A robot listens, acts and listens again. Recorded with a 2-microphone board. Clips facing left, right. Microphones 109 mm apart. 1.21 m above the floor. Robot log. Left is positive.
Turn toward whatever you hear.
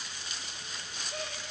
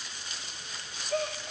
cmd yaw -90
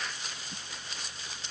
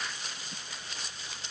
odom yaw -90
end: I heard a gasp from this way, but can't make it out now.